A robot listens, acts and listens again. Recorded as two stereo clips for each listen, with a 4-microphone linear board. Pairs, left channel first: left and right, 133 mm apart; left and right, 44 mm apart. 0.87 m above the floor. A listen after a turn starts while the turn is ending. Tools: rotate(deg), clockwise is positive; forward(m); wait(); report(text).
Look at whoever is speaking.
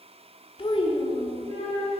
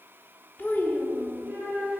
rotate(-45)
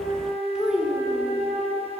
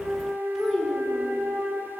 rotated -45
report("Found it: a child speaking, straight ahead, 1 to 2 m away.")